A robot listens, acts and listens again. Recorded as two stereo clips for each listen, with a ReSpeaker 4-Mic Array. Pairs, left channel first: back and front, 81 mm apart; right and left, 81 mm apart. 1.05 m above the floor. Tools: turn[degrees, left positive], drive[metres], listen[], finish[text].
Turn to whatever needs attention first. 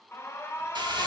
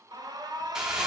Thought: The alarm: 120° left.
Action: turn[120]
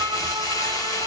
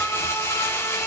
Thought: The alarm is now 30° right.
Action: turn[-30]
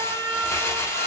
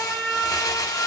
Thought: The alarm is now 15° right.
Action: turn[-15]
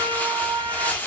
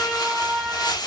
Action: finish[Found it: an alarm, straight ahead, under 1 m away.]